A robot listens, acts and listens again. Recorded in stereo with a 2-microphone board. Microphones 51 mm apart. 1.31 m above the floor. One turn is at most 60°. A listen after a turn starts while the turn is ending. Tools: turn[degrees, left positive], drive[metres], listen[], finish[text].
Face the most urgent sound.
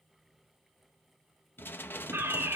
Thought: The fire alarm: about 55° right or 125° right.
Action: turn[-55]
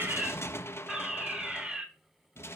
Thought: So it is at 20° right.
Action: turn[-20]
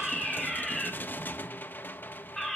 Action: finish[Found it: a fire alarm, straight ahead.]